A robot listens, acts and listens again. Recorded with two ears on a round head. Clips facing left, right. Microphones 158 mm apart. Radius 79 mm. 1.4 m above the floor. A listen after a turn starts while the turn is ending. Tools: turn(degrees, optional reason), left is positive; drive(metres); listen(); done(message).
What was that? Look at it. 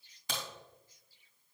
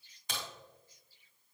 turn(degrees=65, reason="The crack: about 65° left or 115° left.")
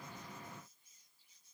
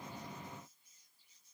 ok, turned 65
listen()
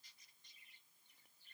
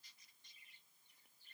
done("I heard a crack, but can't make it out now. It was about straight ahead or 50° left.")